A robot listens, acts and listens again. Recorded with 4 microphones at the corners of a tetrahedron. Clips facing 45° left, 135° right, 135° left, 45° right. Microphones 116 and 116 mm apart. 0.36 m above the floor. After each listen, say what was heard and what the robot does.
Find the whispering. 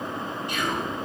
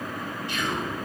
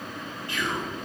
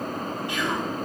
The whispering: 20° left. Turn 20° left.
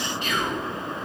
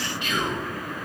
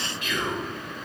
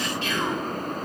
Found it: whispering, straight ahead, 2 to 4 m away.